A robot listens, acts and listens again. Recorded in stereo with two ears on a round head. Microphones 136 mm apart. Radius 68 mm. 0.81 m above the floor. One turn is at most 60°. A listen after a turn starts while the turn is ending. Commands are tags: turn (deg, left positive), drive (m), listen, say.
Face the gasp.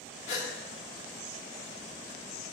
<turn deg="45"/>
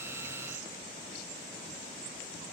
<listen/>
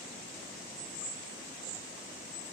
<say>I heard a gasp, but can't make it out now. It was about straight ahead or 90° left.</say>